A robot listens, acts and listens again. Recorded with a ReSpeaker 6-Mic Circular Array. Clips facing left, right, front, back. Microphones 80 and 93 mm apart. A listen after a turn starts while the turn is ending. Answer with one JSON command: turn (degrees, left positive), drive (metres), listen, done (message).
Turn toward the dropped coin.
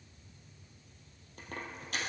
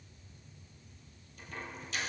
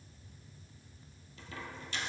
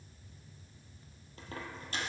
{"turn": 130}
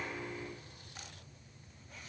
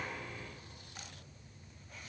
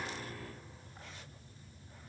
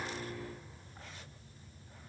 {"done": "I heard a dropped coin from this way, but can't make it out now."}